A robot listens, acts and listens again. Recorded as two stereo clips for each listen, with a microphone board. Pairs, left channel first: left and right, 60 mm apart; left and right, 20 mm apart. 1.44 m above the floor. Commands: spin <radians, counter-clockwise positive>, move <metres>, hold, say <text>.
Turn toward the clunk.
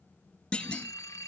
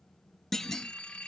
spin 0.35
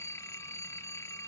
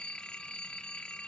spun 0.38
hold
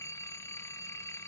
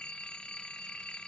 say I heard a clunk, but can't make it out now. It was about 5° right or 140° left.